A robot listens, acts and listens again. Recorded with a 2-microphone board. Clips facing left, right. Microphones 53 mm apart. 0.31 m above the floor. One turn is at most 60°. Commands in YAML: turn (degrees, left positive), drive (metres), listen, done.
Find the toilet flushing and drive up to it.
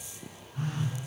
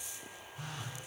listen: true
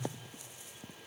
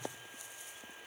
listen: true
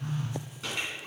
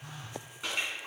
turn: -30
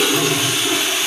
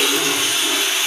turn: 15
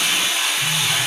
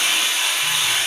drive: 1.0
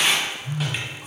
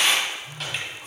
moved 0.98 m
drive: 1.0
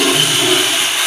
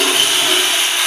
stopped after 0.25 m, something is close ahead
done: "Arrived at the toilet flushing, straight ahead."